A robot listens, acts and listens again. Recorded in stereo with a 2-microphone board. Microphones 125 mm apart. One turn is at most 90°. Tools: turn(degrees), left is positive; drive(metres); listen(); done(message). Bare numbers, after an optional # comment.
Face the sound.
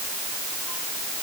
listen()
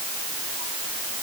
listen()
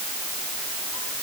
done("I can't make out anything.")